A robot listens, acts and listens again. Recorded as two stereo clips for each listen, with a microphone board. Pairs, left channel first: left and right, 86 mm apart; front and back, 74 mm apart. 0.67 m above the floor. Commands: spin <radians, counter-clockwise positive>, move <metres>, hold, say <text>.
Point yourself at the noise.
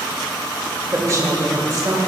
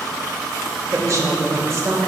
spin -2.27
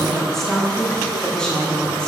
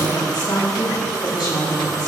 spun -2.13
spin 0.17
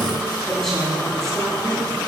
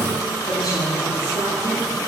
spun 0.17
say Facing the woman speaking, over 4 m away.